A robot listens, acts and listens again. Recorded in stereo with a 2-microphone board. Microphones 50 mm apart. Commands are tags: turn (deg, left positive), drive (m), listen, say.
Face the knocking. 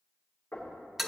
<turn deg="50"/>
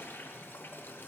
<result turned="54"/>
<listen/>
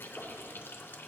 <say>Facing the knocking, 2 to 4 m away.</say>